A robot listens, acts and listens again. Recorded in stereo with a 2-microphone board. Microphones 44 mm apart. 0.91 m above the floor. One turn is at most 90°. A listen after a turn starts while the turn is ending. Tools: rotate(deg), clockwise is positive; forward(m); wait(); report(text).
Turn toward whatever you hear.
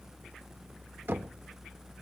rotate(55)
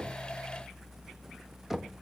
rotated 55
report("Found it: knocking, straight ahead.")